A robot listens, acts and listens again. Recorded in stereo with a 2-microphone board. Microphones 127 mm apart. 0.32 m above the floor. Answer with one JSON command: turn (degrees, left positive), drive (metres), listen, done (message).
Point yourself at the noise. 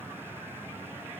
{"listen": true}
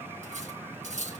{"turn": -75}
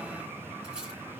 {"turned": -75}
{"listen": true}
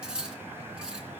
{"done": "Found it: cutlery clinking, straight ahead."}